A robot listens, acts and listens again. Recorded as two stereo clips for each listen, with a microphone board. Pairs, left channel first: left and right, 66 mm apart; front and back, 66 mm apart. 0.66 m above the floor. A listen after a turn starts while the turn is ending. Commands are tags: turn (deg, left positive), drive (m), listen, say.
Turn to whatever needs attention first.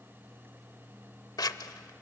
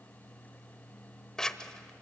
<listen/>
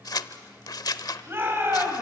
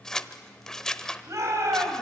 <turn deg="-145"/>
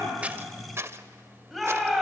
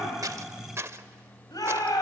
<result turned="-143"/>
<say>Facing the shout, over 4 m away.</say>